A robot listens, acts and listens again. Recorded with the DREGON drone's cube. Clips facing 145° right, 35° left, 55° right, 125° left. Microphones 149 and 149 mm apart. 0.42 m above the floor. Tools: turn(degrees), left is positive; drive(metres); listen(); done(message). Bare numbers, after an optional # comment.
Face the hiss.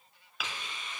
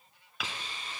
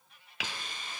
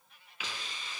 # The hiss: 20° right.
turn(-20)
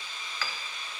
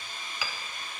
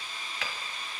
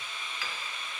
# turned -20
done("Found it: a hiss, straight ahead, 1 to 2 m away.")